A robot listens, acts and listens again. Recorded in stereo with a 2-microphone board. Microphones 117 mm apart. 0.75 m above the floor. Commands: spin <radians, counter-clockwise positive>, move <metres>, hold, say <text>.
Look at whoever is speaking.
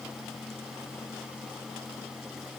hold
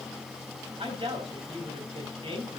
spin -0.87
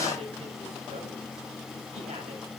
hold
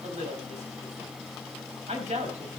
spin -1.48
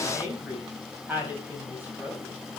spin -0.26
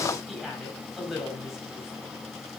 say Found it: a woman speaking, straight ahead, over 4 m away.